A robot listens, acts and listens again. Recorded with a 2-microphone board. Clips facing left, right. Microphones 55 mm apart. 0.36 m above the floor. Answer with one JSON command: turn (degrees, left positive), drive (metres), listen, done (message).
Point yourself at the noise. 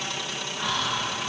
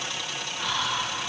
{"turn": 30}
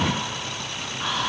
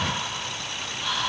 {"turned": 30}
{"turn": 145}
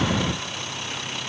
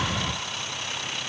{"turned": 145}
{"listen": true}
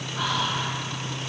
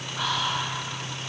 {"done": "Found it: whispering, straight ahead."}